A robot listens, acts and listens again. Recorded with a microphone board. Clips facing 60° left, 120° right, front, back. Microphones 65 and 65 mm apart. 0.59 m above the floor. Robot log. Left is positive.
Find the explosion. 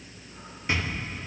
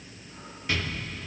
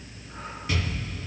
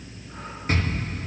note: The explosion: 130° left.
cmd yaw +130
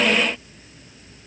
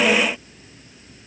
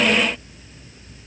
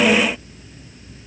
end: Facing where the explosion came from. I can't hear it now.